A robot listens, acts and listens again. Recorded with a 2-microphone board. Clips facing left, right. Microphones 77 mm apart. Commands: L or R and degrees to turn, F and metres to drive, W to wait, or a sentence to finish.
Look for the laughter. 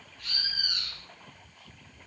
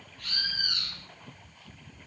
W
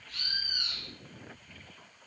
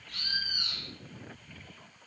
W
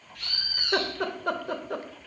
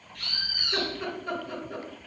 L65
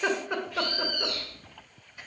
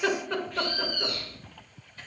L15
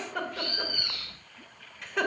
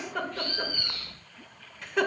Found it: laughter, straight ahead.